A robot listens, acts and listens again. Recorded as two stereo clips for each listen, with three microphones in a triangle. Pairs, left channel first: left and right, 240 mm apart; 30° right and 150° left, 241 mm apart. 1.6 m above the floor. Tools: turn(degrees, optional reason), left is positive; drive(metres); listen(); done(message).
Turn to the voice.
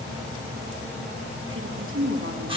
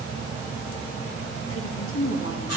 turn(degrees=-60, reason="The woman speaking: 60° right.")
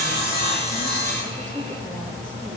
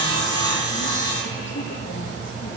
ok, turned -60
listen()
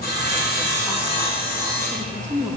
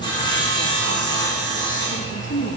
done("Found it: a woman speaking, straight ahead, 2 to 4 m away.")